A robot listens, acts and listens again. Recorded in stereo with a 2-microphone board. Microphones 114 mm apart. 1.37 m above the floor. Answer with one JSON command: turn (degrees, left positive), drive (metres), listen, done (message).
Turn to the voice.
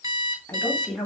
{"turn": 30}
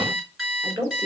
{"turn": -40}
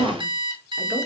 {"listen": true}
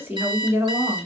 {"turn": -25}
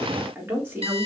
{"turn": -20}
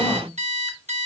{"listen": true}
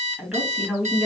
{"done": "Facing the woman speaking, 2 to 4 m away."}